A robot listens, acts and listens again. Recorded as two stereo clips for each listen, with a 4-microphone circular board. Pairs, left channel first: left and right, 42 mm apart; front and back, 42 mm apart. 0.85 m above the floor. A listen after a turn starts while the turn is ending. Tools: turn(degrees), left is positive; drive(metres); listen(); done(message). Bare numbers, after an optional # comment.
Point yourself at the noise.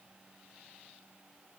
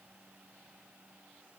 listen()
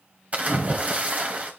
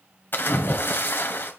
# The splash: 35° right.
turn(-35)
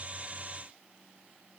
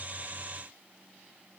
done("Facing where the splash came from. I can't hear it now.")